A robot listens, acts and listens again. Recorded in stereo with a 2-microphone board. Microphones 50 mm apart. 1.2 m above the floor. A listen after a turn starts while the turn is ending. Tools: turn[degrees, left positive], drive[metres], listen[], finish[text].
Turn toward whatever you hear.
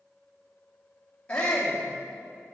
Thought: The shout: about 25° left or 155° left.
Action: turn[25]
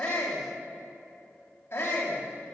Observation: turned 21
Thought: So it is at 135° left.
Action: turn[135]
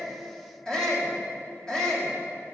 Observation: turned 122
Thought: The shout is now 10° left.
Action: turn[10]
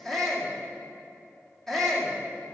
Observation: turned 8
Action: finish[Facing the shout.]